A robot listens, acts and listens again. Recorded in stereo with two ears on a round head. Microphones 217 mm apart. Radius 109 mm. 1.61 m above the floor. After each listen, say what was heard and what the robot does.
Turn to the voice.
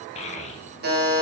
The child speaking: about 25° left or 155° left. Turn 25° left.
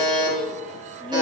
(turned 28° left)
Keep listening.
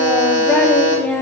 Facing the child speaking.